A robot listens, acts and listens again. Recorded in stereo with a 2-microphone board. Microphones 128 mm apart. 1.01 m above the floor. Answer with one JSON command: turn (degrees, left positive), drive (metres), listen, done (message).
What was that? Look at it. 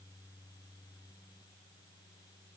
{"listen": true}
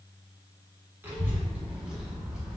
{"turn": -30}
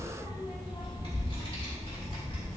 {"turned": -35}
{"turn": 45}
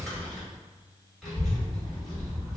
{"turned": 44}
{"done": "Facing the child speaking, 2 to 4 m away."}